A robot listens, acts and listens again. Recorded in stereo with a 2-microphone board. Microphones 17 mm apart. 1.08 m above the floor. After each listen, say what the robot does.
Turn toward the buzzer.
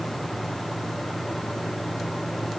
Keep listening.
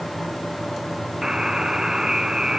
Turn 45° right.
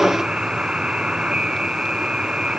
Turn 90° right.
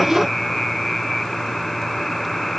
Turn 15° left.
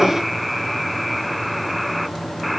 Found it: a buzzer, straight ahead.